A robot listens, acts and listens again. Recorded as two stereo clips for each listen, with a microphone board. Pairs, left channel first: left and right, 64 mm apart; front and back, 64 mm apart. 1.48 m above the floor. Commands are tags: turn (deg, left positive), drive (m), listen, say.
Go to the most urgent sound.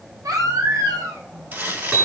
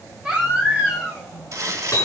<turn deg="-105"/>
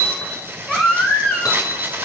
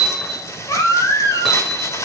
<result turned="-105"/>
<turn deg="10"/>
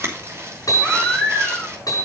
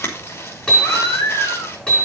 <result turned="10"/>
<drive m="1.0"/>
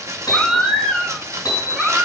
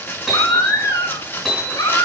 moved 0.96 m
<drive m="1.0"/>
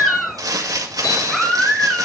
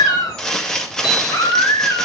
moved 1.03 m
<drive m="1.0"/>
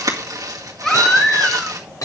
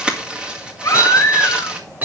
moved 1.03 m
<turn deg="10"/>
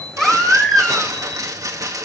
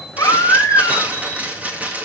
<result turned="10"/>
<drive m="1.0"/>
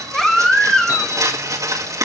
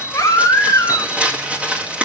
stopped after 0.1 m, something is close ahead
<turn deg="10"/>
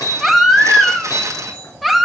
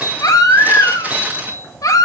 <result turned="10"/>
<say>I am next to the baby crying.</say>